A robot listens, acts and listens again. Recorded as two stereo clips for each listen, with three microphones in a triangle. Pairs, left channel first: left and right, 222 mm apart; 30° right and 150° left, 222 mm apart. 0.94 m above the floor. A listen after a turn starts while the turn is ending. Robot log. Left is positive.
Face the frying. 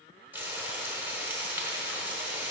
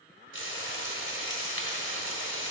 note: The frying: 10° right.
cmd yaw -10
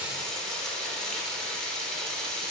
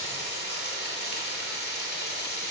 end: Found it: frying, straight ahead.